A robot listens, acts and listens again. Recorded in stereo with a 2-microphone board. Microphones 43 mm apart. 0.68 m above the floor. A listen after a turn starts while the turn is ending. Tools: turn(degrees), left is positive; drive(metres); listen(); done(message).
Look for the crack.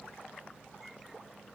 listen()
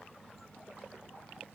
listen()
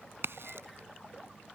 turn(degrees=-70)
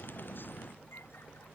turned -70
listen()
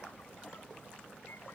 done("I heard a crack, but can't make it out now. It was about straight ahead or 40° right.")